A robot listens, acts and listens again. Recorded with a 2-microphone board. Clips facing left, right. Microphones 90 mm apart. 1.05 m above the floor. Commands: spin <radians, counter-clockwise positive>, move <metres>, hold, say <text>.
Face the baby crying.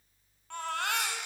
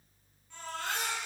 spin 1.13
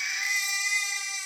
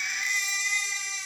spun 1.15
say Facing the baby crying.